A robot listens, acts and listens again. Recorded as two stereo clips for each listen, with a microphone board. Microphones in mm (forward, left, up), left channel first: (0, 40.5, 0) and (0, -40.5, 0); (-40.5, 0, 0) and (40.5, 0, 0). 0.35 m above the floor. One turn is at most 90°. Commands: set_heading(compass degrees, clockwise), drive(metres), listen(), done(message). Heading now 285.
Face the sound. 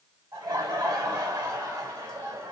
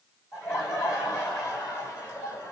set_heading(15)
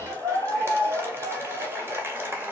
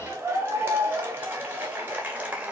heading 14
set_heading(69)
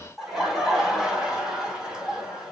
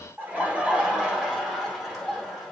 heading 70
set_heading(115)
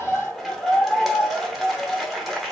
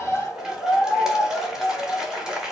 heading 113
done("Facing the laughter.")